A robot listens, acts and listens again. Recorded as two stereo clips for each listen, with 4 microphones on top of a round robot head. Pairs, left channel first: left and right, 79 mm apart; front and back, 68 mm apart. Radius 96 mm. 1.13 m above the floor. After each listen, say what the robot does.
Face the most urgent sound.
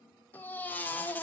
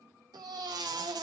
Turn 160° left.
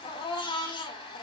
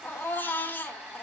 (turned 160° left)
Turn 60° left.
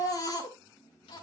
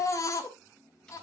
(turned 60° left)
Turn 40° left.
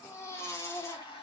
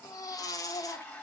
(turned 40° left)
Turn 30° left.
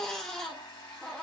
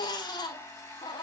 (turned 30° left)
Turn 10° left.
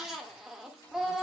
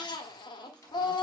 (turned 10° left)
Found it: a baby crying, straight ahead, 1 to 2 m away.